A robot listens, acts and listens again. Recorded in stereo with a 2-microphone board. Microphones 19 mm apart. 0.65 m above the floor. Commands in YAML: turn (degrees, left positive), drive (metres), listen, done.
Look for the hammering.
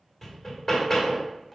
turn: 30
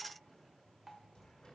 listen: true
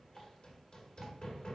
turn: 120
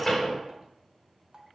turn: 10
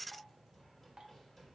listen: true
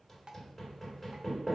done: "Facing the hammering, 1 to 2 m away."